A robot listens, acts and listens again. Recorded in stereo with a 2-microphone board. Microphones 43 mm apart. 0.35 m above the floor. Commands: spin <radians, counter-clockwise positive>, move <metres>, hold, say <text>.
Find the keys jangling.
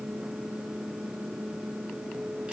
hold
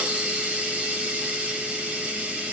hold
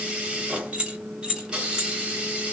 spin -0.35
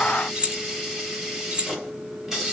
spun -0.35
spin -0.52
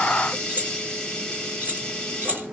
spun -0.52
spin -2.18
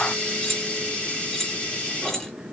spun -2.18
spin 0.17
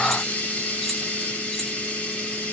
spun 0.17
hold
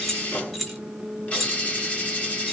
say Found it: keys jangling, straight ahead.